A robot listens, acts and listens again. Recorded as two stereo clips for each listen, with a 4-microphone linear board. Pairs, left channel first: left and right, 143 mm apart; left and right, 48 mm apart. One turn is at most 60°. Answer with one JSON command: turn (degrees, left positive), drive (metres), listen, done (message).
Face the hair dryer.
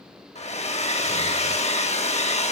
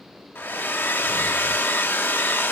{"turn": 45}
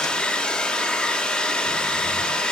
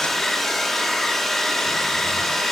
{"done": "Facing the hair dryer, under 1 m away."}